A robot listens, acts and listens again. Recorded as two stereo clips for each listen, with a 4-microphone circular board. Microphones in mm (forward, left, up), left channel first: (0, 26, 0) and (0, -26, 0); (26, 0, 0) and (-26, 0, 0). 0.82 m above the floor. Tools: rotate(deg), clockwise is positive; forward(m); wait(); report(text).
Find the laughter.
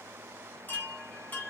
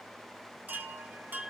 wait()
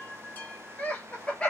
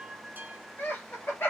rotate(-25)
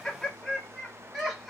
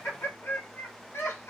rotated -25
report("Found it: laughter, straight ahead, 2 to 4 m away.")